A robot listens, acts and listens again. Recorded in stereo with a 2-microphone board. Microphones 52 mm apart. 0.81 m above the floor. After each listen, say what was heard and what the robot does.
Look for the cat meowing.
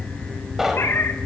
The cat meowing: about 55° left or 125° left. Turn 55° left.
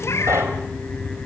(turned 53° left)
So it is at 60° left. Turn 60° left.
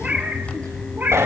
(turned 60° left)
The cat meowing is now 30° right. Turn 30° right.
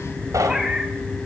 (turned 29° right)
The cat meowing is now 15° right. Turn 15° right.
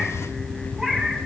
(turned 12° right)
Found it: a cat meowing, straight ahead.